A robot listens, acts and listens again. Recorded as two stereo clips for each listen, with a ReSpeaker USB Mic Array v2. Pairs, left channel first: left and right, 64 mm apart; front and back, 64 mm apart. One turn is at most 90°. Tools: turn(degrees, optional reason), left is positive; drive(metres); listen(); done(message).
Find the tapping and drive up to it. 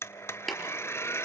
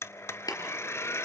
drive(metres=1.0)
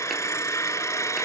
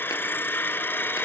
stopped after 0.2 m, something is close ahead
listen()
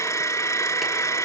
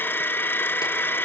listen()
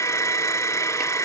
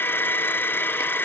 done("Facing where the tapping came from. I can't hear it now. I did not reach it.")